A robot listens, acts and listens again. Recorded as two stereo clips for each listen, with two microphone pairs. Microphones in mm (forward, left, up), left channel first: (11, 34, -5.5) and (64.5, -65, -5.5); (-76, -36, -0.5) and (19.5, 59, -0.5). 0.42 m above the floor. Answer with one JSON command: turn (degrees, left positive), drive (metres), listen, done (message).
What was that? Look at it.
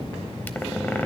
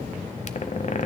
{"turn": -165}
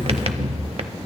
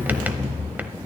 {"turn": -30}
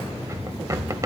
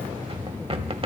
{"done": "Facing the squeak, under 1 m away."}